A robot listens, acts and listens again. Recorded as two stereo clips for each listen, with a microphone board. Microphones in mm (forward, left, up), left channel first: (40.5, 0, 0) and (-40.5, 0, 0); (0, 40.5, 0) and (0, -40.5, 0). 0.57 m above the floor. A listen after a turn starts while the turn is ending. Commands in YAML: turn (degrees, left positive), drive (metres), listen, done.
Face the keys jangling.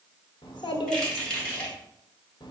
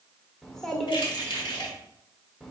turn: 75
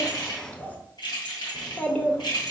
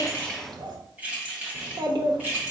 turn: -25
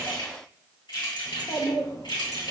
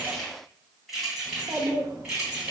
turn: -10
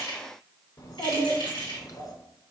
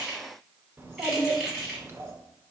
done: "Facing the keys jangling."